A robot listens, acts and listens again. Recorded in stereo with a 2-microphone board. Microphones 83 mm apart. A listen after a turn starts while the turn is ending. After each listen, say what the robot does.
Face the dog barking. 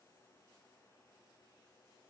Keep listening.
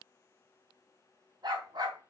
Turn 50° right.
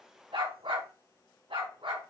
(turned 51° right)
Turn 80° right.
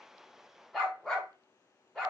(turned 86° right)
Facing the dog barking, over 4 m away.